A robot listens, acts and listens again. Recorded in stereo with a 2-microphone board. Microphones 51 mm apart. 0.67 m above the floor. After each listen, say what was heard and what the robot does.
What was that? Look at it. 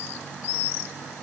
Keep listening.
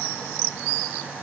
Keep listening.
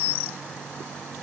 I can't make out anything to turn to.